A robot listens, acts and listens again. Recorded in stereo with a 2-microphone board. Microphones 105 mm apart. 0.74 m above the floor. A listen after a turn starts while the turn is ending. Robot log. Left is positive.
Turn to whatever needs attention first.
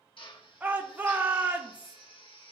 note: The shout: about 15° right or 165° right.
cmd yaw -15
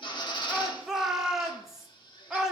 end: Facing the shout.